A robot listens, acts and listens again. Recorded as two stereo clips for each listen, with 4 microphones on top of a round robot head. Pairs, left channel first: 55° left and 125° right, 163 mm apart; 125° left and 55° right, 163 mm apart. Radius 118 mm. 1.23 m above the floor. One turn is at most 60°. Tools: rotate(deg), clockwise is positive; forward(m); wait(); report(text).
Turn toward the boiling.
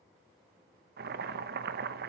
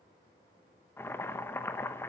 rotate(60)
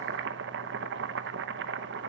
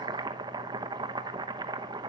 rotate(60)
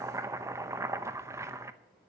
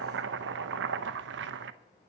rotate(50)
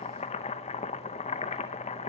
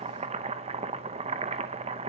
report("Found it: boiling, straight ahead.")